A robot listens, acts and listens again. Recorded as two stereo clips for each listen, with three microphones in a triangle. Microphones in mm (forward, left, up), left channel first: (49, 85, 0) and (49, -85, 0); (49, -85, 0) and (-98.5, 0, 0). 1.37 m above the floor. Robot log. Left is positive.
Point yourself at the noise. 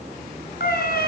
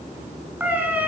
note: The cat meowing: 70° left.
cmd yaw +70
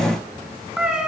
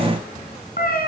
end: Found it: a cat meowing, straight ahead, over 4 m away.